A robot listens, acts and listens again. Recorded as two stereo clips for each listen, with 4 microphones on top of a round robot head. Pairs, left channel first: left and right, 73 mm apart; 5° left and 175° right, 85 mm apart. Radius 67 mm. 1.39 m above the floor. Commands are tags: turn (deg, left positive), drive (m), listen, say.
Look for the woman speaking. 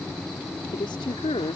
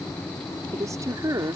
<turn deg="130"/>
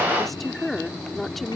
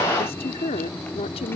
<say>Found it: a woman speaking, straight ahead.</say>